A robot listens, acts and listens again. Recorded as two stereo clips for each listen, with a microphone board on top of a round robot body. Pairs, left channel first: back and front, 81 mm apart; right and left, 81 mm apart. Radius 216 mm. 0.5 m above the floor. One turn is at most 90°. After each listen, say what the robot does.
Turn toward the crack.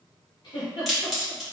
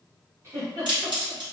Turn 90° left.
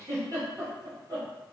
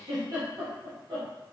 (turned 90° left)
I heard a crack from this way, but can't make it out now.